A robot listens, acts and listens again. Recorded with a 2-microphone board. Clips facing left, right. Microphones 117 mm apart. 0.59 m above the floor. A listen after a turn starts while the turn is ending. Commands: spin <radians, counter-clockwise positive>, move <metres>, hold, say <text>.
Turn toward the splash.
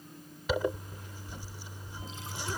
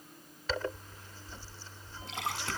spin -1.57
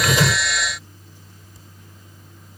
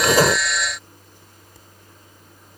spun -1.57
say I heard a splash from this way, but can't make it out now.